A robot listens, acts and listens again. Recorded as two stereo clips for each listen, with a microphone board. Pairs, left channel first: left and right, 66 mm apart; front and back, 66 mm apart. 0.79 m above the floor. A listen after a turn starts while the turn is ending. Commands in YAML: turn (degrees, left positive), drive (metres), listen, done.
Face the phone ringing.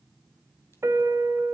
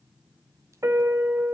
listen: true
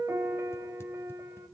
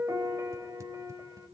listen: true
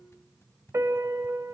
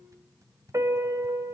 done: "I can't make out a phone ringing, only a piano."